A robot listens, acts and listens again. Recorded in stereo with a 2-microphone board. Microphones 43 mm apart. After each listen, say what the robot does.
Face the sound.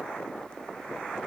Keep listening.
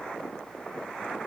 Keep listening.
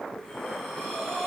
Turn 30° left.
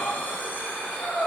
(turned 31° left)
Turn 135° left.
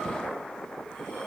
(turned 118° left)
Turn 20° left.
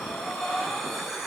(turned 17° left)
Facing the breathing, 1 to 2 m away.